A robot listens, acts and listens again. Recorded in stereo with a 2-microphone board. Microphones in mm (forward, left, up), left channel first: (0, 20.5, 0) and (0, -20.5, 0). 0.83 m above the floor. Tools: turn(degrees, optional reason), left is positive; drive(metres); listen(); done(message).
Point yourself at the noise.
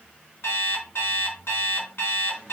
turn(degrees=75, reason="The alarm clock: about 75° left or 105° left.")
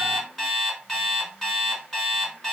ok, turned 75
done("Facing the alarm clock.")